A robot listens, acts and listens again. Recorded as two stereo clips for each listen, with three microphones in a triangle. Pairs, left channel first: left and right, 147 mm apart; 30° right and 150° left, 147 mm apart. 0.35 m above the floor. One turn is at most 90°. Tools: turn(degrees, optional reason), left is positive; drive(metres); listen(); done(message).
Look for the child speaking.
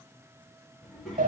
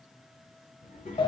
done("Facing the child speaking.")